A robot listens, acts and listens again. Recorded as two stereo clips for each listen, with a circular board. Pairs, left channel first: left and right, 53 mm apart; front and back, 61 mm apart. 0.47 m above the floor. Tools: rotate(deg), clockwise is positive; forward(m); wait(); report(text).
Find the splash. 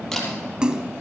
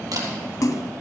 rotate(15)
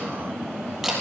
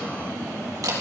report("I heard a splash from this way, but can't make it out now.")